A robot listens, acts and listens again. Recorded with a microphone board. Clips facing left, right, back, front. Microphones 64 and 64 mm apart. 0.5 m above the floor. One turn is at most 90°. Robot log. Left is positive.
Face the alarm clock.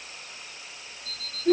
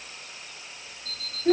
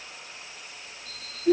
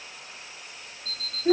end: Facing the alarm clock.